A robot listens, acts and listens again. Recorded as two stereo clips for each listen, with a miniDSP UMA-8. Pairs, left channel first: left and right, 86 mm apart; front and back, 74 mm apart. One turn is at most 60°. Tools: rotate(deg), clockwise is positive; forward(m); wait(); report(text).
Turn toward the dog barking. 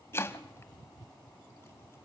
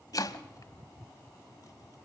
wait()
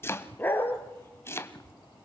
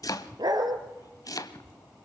rotate(-60)
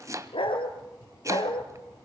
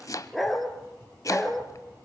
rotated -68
rotate(-60)
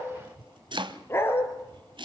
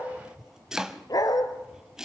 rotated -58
rotate(-30)
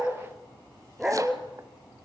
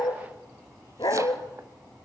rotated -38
rotate(10)
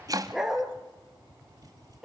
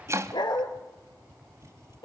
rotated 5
report("Found it: a dog barking, straight ahead.")